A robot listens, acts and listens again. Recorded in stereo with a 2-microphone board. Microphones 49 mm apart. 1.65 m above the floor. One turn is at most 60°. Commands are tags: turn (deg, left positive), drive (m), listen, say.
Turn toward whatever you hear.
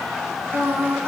<turn deg="-55"/>
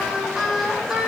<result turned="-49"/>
<turn deg="-10"/>
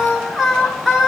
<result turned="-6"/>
<turn deg="-10"/>
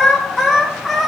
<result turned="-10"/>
<say>Facing the singing, 1 to 2 m away.</say>